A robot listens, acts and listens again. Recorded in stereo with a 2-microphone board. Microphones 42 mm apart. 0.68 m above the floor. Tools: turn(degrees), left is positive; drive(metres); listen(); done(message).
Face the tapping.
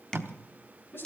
turn(degrees=30)
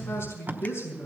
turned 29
listen()
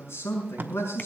listen()
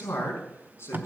done("I heard tapping, but can't make it out now. It was about 15° right or 135° left.")